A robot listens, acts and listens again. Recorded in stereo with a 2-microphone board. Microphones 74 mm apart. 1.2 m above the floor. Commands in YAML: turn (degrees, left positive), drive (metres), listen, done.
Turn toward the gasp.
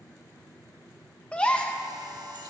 turn: 30
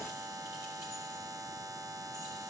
listen: true
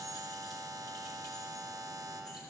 done: "I heard a gasp, but can't make it out now. It was about 15° right or 135° left."